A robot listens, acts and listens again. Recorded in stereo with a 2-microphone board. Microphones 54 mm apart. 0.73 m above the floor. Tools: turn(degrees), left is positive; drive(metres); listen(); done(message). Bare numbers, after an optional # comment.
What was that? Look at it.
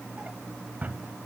# The drawer: about 30° right or 150° right.
turn(-30)
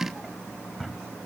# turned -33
done("Found it: a drawer, straight ahead, 1 to 2 m away.")